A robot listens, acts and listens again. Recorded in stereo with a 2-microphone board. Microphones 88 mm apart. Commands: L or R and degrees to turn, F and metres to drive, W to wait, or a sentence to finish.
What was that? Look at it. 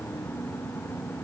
W
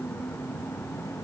W
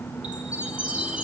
R30
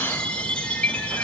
L15
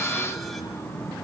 W
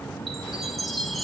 Facing the chime, 1 to 2 m away.